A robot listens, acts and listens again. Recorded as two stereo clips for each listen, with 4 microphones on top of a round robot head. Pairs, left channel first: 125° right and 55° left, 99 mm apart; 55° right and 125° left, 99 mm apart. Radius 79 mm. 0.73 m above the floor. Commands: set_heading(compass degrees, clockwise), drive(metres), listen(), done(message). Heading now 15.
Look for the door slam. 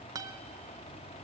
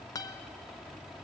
listen()
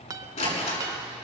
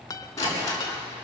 set_heading(130)
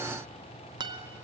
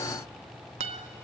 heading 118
set_heading(128)
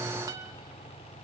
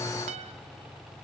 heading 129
done("I heard a door slam from this way, but can't make it out now.")